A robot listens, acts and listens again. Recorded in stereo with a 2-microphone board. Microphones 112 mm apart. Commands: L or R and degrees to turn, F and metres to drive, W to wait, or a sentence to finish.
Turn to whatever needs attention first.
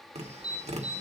L35
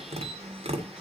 W
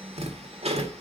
W
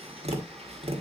I heard an alarm, but can't make it out now. It was about straight ahead or 110° left.